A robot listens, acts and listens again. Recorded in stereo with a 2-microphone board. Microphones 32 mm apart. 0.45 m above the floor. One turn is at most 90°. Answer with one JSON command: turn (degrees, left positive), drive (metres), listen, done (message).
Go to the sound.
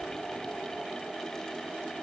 {"listen": true}
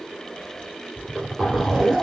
{"turn": -30}
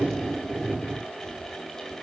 {"turn": -90}
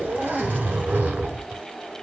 {"turn": -60}
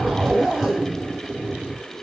{"drive": 1.0}
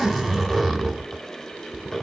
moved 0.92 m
{"drive": 1.0}
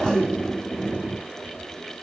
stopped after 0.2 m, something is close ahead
{"turn": 15}
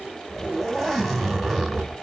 {"done": "I am next to the zipper."}